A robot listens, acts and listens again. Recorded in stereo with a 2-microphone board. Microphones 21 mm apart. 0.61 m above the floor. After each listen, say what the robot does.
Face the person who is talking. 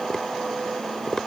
Keep listening.
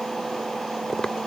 Keep listening.
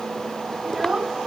Turn 25° right.
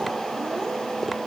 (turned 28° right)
Keep listening.
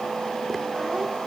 Keep listening.
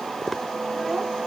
I heard a child speaking, but can't make it out now. It was about 5° left or 130° right.